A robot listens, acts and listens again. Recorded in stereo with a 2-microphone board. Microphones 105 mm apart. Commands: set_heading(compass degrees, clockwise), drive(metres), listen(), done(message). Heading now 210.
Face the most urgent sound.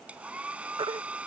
set_heading(265)
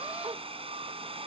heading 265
listen()
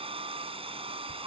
set_heading(330)
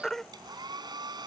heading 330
done("Facing the baby crying.")